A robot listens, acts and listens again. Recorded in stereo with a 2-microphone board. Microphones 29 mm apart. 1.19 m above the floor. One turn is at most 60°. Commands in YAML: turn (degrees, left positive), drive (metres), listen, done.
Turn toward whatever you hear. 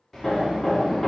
turn: 20
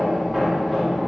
done: "Facing the hammering, 1 to 2 m away."